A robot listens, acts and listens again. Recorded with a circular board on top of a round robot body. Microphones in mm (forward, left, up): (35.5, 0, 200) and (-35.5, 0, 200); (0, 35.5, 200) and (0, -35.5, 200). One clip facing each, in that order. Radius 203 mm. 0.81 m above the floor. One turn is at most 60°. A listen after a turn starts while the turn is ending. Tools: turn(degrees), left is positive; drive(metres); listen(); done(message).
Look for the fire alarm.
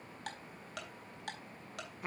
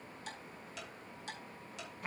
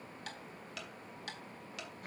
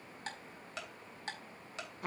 listen()
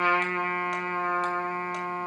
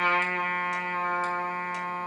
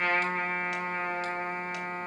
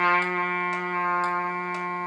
listen()
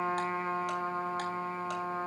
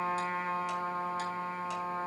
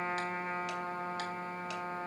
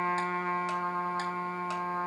done("I can't make out a fire alarm to turn to.")